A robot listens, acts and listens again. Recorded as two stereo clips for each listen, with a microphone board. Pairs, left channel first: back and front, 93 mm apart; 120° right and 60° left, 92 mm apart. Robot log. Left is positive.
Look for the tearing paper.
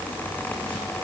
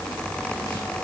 cmd idle
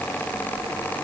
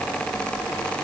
cmd idle
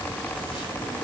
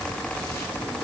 end: I can't make out tearing paper to turn to.